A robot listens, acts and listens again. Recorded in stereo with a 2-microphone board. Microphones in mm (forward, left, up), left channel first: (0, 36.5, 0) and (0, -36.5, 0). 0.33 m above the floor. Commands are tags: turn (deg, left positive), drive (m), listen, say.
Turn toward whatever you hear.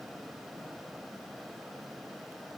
<listen/>
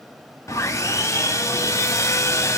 <turn deg="45"/>
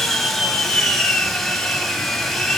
<say>Found it: sawing, straight ahead, 1 to 2 m away.</say>